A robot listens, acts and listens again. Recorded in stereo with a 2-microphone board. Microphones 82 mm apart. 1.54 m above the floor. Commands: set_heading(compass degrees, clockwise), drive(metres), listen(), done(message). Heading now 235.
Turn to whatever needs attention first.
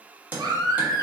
set_heading(290)
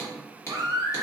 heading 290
set_heading(355)
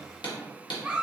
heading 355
set_heading(10)
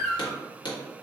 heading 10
done("Found it: a baby crying, straight ahead.")